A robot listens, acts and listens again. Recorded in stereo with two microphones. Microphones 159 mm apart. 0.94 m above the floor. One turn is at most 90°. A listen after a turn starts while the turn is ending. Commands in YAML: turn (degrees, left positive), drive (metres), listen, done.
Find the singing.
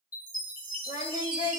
turn: 60
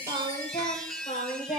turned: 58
turn: 45
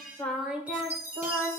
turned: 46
turn: -20
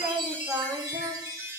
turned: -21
turn: -20
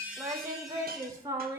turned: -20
turn: -20
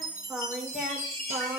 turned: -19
done: "Facing the singing."